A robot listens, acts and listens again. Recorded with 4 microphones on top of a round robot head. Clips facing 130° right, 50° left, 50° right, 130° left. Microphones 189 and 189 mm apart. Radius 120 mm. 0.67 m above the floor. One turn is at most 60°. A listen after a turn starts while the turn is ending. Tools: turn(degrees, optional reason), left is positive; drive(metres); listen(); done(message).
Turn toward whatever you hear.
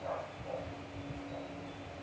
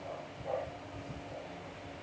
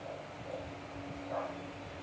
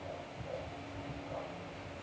listen()
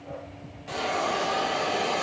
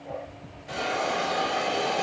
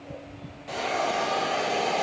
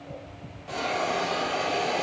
turn(degrees=-60, reason="The hiss: 130° right.")
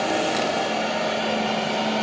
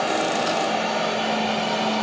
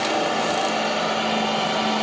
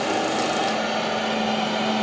turn(degrees=-50, reason="The hiss is now 50° right.")
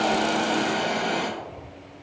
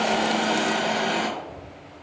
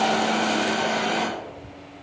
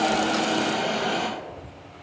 turn(degrees=-15, reason="The hiss is now 15° right.")
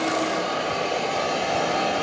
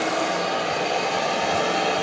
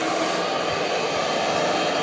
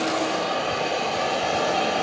done("Facing the hiss, under 1 m away.")